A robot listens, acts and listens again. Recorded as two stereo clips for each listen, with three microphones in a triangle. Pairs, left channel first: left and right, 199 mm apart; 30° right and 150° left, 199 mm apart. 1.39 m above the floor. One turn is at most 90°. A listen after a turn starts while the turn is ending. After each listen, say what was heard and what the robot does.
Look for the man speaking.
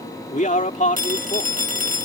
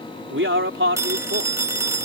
The man speaking: 140° left. Turn 90° left.
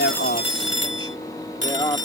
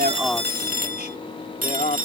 The man speaking is now 20° left. Turn 20° left.
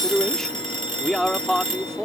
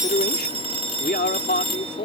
Facing the man speaking.